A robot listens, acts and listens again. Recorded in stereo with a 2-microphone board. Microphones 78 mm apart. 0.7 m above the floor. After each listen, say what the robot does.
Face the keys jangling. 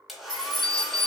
Turn 90° left.
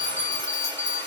Keep listening.
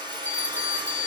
Keep listening.
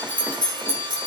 Turn 20° right.
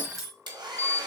Facing the keys jangling.